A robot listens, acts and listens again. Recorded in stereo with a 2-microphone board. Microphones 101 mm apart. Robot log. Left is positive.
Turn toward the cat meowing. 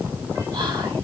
cmd idle
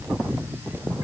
cmd idle
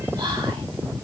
end: I can't make out a cat meowing to turn to.